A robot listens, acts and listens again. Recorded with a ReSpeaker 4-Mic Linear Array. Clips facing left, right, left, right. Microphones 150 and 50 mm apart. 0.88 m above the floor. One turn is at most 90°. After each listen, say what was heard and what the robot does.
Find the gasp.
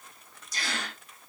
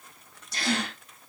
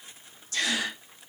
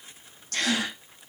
The gasp: about 65° right or 115° right. Turn 65° right.
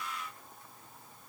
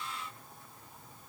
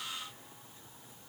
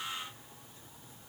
Keep listening.
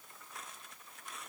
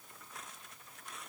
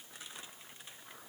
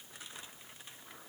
I heard a gasp, but can't make it out now. It was about straight ahead or 50° right.